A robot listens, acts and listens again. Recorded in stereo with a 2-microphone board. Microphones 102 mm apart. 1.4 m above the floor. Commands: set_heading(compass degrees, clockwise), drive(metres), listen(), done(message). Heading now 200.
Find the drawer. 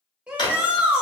set_heading(155)
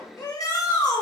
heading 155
listen()
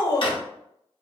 set_heading(75)
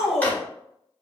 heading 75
listen()
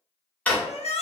set_heading(60)
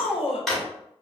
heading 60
done("Found it: a drawer, straight ahead, 1 to 2 m away.")